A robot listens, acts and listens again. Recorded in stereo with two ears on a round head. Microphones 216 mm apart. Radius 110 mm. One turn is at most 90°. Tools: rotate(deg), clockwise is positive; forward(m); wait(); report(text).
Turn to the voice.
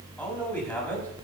rotate(-30)
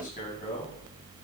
wait()
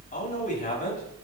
rotate(-90)
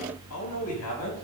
rotate(-70)
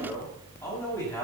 rotate(-15)
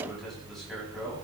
wait()
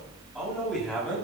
report("Found it: a man speaking, straight ahead, over 4 m away.")